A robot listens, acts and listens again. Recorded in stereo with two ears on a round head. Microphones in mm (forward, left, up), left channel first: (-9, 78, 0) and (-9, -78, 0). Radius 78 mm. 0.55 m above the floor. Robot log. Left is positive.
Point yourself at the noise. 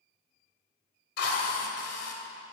note: The drill: about 70° left or 110° left.
cmd yaw +70
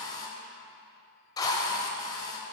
note: So it is at 25° left.
cmd yaw +25
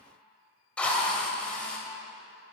note: The drill is now 10° left.
cmd yaw +10
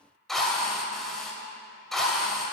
end: Found it: a drill, straight ahead.